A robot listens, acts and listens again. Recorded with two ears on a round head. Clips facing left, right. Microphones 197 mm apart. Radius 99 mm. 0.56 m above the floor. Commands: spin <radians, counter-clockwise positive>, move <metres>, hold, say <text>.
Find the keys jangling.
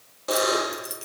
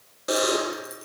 spin 0.70
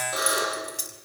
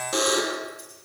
spin 1.75
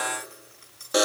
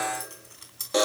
spin -0.87
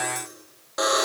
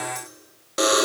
hold
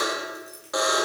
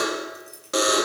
spin -0.17
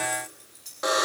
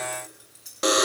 spin -0.17
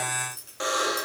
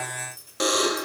say Found it: keys jangling, straight ahead, over 4 m away.